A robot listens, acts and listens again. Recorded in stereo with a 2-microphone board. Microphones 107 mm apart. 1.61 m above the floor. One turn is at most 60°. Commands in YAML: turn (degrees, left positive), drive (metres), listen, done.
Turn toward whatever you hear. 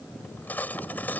turn: 15
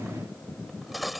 done: "Facing the cutlery clinking."